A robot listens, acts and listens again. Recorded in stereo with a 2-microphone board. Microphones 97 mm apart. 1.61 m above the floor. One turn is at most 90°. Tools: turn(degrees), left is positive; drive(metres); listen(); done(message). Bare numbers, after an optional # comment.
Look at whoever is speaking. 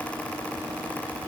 listen()
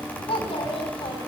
turn(90)
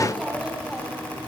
listen()
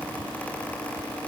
listen()
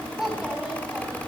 done("Found it: a child speaking, straight ahead.")